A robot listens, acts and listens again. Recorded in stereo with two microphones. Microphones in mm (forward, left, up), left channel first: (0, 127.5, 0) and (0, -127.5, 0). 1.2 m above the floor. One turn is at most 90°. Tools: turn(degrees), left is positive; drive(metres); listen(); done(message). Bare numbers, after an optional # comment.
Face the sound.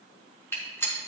turn(30)
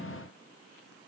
listen()
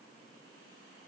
done("I heard a gunshot, but can't make it out now. It was about 20° right or 140° left.")